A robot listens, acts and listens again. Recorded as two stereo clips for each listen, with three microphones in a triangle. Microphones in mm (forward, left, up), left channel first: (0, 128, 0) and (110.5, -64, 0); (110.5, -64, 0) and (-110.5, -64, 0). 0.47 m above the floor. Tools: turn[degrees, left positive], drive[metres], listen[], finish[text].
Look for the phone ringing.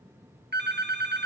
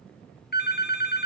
Thought: The phone ringing: 30° right.
Action: turn[-30]
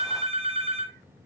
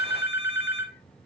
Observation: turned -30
Action: finish[Found it: a phone ringing, straight ahead.]